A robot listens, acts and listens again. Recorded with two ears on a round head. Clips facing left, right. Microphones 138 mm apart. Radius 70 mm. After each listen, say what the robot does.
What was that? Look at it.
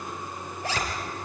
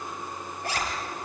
Turn 65° left.
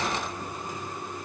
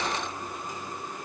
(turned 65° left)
Keep listening.
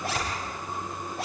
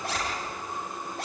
Facing the zipper, over 4 m away.